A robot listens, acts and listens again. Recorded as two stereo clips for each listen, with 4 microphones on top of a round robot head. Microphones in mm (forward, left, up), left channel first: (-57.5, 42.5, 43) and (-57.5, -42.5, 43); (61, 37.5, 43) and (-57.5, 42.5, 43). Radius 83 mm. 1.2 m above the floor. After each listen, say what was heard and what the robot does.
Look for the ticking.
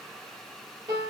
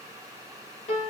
Keep listening.
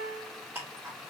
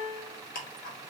The ticking: 10° right. Turn 10° right.
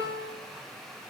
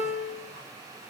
Keep listening.
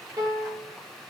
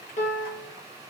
Keep listening.
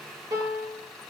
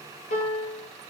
Facing where the ticking came from. I can't hear it now.